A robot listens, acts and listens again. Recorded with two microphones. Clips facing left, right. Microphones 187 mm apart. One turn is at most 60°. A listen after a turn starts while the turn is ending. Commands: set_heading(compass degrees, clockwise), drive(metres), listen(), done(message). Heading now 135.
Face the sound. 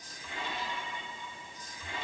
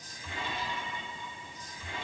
listen()
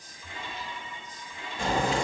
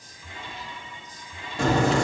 set_heading(195)
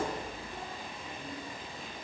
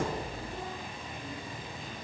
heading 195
set_heading(225)
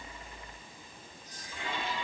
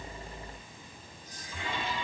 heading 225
done("I heard a crack from this way, but can't make it out now.")